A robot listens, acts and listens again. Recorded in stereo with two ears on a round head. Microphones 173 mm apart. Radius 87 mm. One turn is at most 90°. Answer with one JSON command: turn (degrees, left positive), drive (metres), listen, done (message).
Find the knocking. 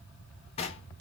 {"turn": 30}
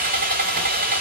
{"listen": true}
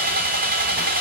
{"listen": true}
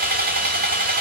{"done": "I heard knocking, but can't make it out now. It was about straight ahead or 120° left."}